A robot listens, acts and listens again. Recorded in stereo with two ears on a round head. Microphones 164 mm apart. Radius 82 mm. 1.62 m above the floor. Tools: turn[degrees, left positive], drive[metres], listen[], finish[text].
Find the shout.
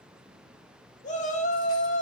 Thought: The shout: about 40° left or 140° left.
Action: turn[40]
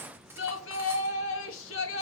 Thought: So it is at 95° left.
Action: turn[95]
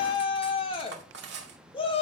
Thought: The shout is now 30° left.
Action: turn[30]
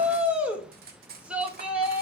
Action: finish[Found it: a shout, straight ahead.]